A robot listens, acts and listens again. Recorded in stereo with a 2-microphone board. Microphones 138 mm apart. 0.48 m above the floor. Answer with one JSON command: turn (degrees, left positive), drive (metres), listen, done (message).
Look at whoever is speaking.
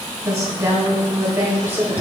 {"turn": -30}
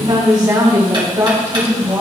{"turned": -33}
{"turn": -15}
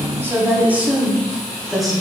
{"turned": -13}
{"turn": 30}
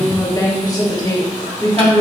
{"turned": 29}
{"turn": 150}
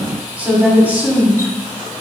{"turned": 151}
{"turn": -10}
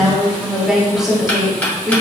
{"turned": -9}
{"done": "Facing the woman speaking."}